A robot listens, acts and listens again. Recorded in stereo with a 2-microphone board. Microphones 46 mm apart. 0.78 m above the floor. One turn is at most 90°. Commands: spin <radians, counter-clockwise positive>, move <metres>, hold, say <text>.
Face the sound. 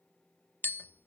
spin 0.87
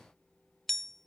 spin 0.17
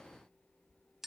say Found it: tapping, straight ahead.